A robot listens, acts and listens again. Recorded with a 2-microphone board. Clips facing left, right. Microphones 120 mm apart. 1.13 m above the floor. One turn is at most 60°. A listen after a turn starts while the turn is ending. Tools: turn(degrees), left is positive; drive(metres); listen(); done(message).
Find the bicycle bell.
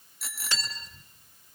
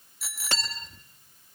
turn(degrees=30)
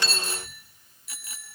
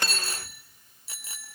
turn(degrees=-30)
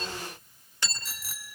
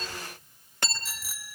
done("Facing the bicycle bell, 2 to 4 m away.")